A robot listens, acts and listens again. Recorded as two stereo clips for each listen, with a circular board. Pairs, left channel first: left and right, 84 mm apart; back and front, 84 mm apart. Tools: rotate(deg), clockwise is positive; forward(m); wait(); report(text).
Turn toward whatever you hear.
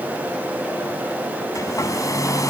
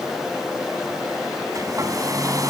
rotate(-45)
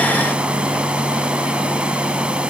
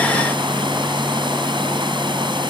rotate(15)
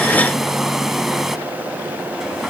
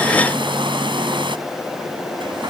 report("Found it: a hair dryer, straight ahead.")